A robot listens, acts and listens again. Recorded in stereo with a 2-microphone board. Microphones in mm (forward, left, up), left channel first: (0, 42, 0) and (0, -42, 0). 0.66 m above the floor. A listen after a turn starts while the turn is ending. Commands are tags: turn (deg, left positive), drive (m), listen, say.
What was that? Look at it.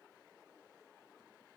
<listen/>
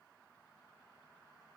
<listen/>
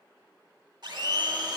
<turn deg="-60"/>
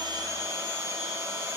<turn deg="-45"/>
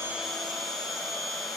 <say>Found it: a blender, straight ahead, under 1 m away.</say>